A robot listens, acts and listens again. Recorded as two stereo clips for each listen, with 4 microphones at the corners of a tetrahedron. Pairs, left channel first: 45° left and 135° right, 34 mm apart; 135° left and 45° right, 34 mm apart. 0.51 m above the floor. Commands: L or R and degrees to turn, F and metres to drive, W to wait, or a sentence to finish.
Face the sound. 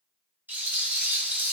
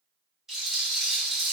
R120
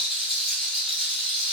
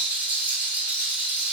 R60
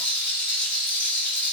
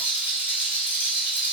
R10
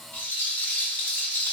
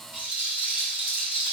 Facing the rattle, 1 to 2 m away.